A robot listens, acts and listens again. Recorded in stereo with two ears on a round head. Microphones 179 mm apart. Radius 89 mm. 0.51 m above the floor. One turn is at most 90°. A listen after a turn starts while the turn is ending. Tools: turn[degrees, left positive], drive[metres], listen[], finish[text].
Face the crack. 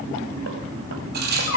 Thought: The crack: about 50° right or 130° right.
Action: turn[-50]
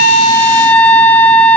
Action: listen[]
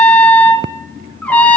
Action: finish[I heard a crack, but can't make it out now. It was about straight ahead or 80° right.]